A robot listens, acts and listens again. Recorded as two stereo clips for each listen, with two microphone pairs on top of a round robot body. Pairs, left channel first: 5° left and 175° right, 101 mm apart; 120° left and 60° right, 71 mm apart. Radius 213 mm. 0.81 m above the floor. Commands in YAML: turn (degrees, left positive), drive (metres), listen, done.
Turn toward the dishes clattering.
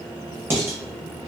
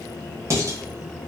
turn: -110
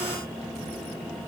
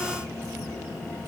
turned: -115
listen: true
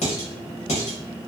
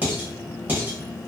done: "Facing the dishes clattering, under 1 m away."